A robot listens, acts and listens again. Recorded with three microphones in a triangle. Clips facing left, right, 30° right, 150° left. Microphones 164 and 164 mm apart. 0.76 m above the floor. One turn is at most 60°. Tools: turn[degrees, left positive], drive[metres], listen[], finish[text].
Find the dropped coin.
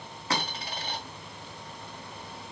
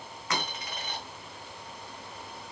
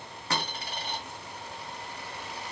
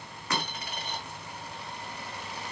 Thought: The dropped coin: 30° left.
Action: turn[30]
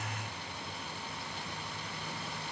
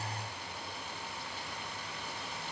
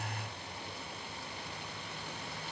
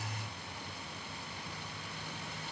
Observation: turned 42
Thought: Nothing new. It was at 15° right.
Action: turn[-15]
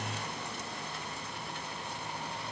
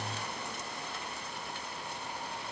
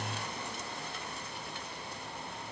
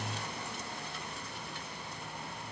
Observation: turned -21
Action: finish[I heard a dropped coin from this way, but can't make it out now.]